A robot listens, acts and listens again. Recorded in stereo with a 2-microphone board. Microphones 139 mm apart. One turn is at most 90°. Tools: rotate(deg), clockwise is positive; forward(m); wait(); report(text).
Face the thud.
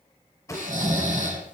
rotate(-20)
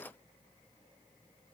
wait()
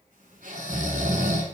report("I heard a thud, but can't make it out now. It was about straight ahead or 140° left.")